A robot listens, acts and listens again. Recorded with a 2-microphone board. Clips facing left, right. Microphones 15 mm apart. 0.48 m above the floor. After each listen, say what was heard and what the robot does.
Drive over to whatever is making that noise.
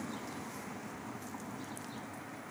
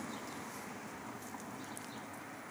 Keep listening.
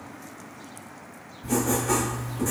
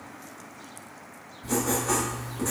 The writing: about 45° right or 135° right. Turn 45° right.
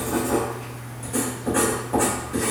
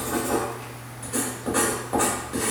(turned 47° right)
So it is at 75° right. Turn 75° right.
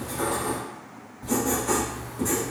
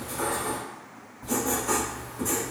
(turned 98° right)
The writing is now 25° left. Turn 25° left.
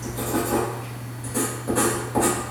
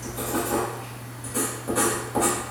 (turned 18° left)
The writing is now 10° left. Turn 10° left.
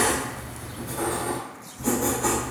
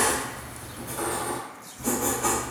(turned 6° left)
Drive 1.0 m forward.
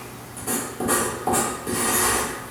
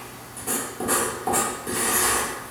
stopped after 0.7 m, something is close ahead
The writing is now 10° left. Turn 10° left.
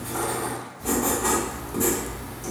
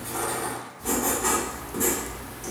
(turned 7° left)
I am next to the writing.